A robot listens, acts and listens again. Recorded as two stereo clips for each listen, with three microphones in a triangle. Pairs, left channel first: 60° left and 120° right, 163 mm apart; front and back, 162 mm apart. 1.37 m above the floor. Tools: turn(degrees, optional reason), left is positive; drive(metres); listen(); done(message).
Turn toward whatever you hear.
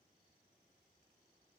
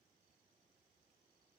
listen()
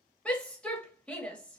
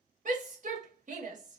turn(degrees=145, reason="The shout: 145° left.")
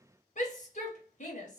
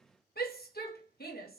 turn(degrees=20, reason="The shout is now 20° left.")
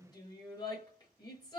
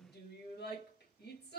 done("Found it: a shout, straight ahead, 1 to 2 m away.")